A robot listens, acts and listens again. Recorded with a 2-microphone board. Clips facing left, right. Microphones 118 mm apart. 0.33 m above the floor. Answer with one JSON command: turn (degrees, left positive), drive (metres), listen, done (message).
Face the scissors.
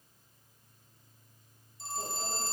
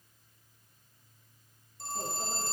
{"listen": true}
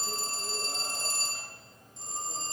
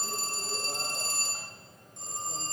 {"listen": true}
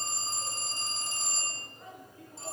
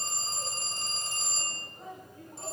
{"done": "I can't make out scissors, only a phone ringing and a microwave."}